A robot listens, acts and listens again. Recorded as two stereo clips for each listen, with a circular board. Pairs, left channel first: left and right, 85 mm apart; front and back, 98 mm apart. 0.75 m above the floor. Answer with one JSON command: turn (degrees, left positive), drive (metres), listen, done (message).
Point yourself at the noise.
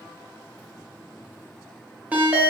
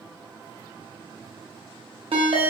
{"turn": -160}
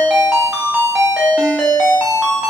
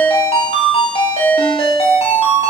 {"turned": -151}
{"turn": -10}
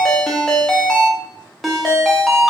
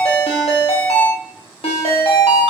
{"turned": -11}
{"done": "Found it: a ringtone, straight ahead, under 1 m away."}